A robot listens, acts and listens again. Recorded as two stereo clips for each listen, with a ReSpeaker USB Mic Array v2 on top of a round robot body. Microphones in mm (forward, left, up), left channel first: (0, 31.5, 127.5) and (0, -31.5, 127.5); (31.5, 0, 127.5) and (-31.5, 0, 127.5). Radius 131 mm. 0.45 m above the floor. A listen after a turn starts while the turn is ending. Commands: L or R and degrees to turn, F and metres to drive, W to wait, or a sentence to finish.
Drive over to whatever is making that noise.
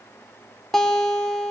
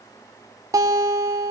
L170
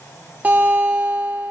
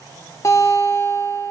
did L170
R35
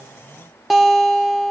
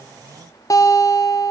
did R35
F1.0
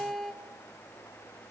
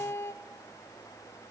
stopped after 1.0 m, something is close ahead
I am next to the guitar.